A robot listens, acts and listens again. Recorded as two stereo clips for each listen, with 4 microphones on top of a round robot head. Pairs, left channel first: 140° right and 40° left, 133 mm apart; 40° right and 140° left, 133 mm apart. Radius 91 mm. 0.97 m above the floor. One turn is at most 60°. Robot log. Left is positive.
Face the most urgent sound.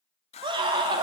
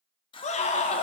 note: The scream: 10° right.
cmd yaw -10
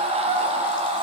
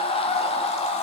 end: Facing the scream, under 1 m away.